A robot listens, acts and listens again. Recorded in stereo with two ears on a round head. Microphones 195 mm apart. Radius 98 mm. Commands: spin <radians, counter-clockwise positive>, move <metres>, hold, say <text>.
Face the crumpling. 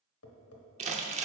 spin -0.52
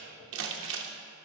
spin -2.01
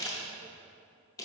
spin 0.26
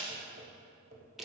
say Found it: crumpling, straight ahead.